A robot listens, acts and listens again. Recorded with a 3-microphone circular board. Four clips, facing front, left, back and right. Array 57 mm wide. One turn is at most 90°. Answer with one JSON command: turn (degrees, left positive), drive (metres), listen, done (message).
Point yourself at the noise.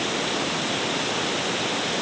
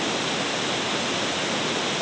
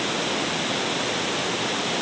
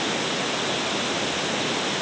{"listen": true}
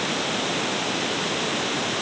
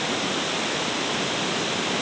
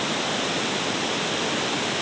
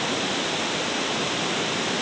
{"listen": true}
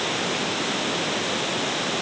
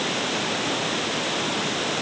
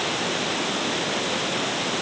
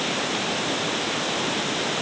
{"done": "I can't make out anything."}